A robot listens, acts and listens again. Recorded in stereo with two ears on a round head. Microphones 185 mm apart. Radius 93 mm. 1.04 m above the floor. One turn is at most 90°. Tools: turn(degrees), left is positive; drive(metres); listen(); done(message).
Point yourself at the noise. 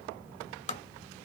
turn(degrees=35)
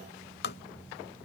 turn(degrees=90)
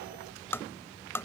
turn(degrees=15)
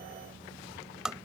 done("Found it: tapping, straight ahead.")